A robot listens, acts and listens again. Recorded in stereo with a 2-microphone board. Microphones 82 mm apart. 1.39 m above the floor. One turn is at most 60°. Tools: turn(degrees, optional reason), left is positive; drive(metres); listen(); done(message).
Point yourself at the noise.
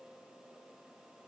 listen()
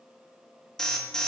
turn(degrees=30)
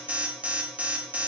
turn(degrees=-20, reason="So it is at 20° right.")
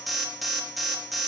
done("Found it: an alarm, straight ahead, 1 to 2 m away.")